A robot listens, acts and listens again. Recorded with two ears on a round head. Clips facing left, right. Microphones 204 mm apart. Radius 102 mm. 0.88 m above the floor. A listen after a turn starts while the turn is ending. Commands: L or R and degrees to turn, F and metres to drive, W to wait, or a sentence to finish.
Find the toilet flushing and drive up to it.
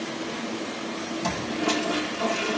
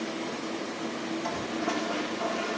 L55
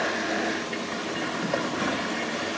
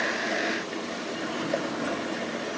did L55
F1.0
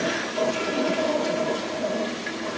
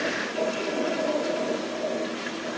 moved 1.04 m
F1.0
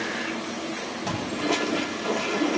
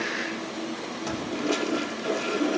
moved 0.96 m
R15
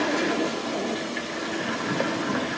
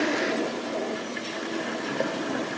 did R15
F1.0
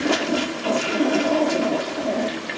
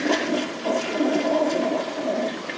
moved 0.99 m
F1.0
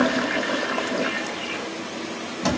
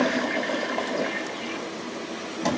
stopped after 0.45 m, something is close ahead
I am next to the toilet flushing.